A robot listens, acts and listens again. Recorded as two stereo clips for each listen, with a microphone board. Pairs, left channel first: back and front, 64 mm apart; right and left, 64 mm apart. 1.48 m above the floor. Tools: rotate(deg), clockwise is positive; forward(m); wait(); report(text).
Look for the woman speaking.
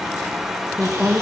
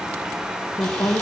rotate(90)
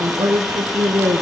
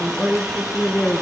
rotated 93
rotate(25)
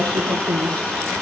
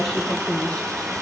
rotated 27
rotate(15)
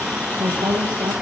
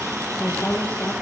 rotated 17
rotate(25)
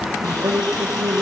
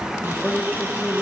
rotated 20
rotate(15)
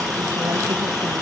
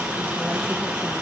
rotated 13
wait()
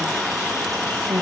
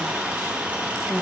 report("Found it: a woman speaking, straight ahead, 2 to 4 m away.")